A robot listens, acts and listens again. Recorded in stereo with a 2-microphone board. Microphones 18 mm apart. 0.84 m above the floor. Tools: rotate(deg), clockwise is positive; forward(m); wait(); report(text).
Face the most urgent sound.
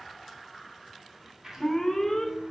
rotate(-25)
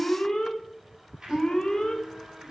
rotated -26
rotate(-130)
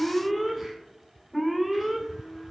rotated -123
report("Facing the alarm.")